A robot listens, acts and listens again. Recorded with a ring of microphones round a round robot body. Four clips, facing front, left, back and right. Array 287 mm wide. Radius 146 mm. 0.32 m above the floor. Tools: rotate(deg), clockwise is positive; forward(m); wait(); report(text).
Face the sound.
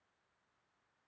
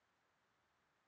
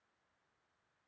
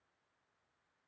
wait()
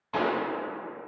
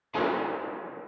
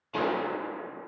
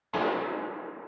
rotate(60)
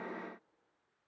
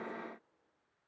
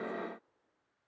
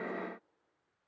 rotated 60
report("I heard a pop from this way, but can't make it out now.")